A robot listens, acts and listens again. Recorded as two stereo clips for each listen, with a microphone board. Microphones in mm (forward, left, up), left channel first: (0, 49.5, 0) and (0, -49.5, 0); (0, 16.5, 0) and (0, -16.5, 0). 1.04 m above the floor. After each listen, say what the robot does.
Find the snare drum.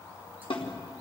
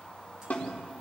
Turn 60° left.
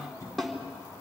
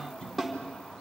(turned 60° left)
Facing the snare drum, 2 to 4 m away.